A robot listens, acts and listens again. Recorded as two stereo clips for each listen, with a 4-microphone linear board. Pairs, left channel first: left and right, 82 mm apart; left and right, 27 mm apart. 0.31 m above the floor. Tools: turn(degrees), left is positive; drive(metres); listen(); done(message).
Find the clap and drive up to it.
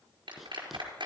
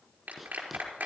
turn(degrees=-90)
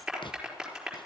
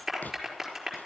turn(degrees=-10)
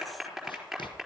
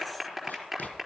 drive(metres=1.0)
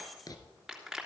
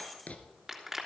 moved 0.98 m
turn(degrees=-10)
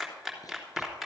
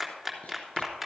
drive(metres=1.0)
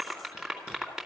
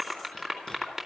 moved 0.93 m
drive(metres=1.0)
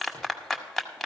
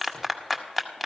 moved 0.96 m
drive(metres=1.0)
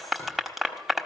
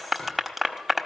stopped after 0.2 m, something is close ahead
done("I am next to the clap.")